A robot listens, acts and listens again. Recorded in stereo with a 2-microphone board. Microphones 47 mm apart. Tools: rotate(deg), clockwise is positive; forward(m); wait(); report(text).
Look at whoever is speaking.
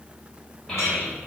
rotate(-15)
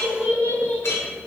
rotate(-150)
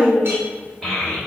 rotate(-10)
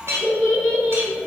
report("Found it: a child speaking, straight ahead, 1 to 2 m away.")